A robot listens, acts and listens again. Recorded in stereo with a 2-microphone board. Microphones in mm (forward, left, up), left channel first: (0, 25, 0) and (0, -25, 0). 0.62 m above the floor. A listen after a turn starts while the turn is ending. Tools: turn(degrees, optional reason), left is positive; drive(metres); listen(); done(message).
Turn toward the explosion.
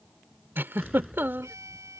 turn(degrees=30)
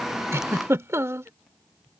listen()
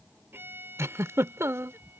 done("I heard an explosion, but can't make it out now. It was about 30° right or 150° left.")